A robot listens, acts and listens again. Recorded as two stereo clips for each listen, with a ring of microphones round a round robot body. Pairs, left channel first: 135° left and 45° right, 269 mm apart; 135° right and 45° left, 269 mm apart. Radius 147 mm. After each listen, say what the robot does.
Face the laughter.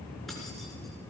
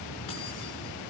Keep listening.
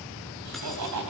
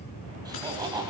Turn 30° right.
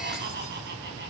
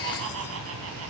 Facing the laughter.